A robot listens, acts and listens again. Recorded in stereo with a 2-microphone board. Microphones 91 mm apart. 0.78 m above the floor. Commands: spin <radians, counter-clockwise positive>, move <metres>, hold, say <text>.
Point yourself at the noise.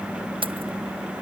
spin -1.22
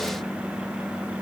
hold
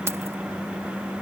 hold
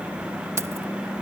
spin -0.52
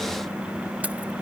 hold
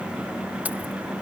hold
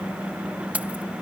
spin -0.26
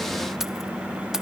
hold
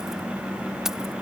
hold
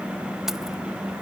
say I heard keys jangling from this way, but can't make it out now.